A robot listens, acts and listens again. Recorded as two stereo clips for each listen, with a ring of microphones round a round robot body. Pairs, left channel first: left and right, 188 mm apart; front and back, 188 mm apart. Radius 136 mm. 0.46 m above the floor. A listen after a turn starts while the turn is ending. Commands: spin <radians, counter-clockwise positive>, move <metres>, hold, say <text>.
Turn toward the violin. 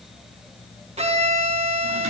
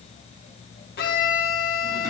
spin -0.61
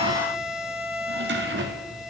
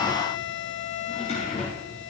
say Facing the violin, 2 to 4 m away.